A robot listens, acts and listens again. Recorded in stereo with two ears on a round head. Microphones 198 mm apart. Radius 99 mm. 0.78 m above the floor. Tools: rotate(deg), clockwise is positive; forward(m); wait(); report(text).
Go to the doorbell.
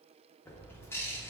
wait()
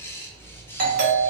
rotate(40)
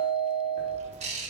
rotate(95)
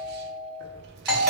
forward(1.0)
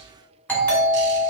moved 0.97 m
rotate(-10)
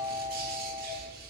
forward(1.0)
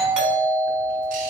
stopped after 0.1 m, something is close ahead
report("I am next to the doorbell.")